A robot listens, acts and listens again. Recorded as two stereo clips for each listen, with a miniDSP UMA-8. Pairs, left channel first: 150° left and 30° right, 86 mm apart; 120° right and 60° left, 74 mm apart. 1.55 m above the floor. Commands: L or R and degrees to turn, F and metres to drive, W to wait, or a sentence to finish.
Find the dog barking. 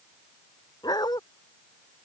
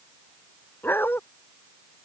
L180
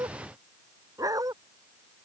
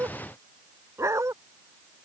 L15
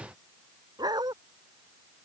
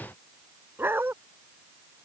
Facing the dog barking.